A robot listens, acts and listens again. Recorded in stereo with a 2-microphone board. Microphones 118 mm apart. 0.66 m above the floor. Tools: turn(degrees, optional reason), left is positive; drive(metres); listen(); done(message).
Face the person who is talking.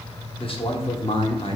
turn(degrees=50, reason="The man speaking: about 50° left or 130° left.")
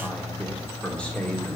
turn(degrees=10, reason="So it is at 10° left.")
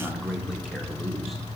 done("Facing the man speaking, 1 to 2 m away.")